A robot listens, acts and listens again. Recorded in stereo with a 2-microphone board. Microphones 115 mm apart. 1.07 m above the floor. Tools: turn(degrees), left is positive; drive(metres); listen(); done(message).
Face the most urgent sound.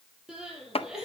turn(degrees=-30)
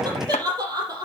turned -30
turn(degrees=-145)
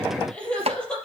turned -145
turn(degrees=10)
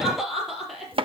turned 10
done("Facing the crying, over 4 m away.")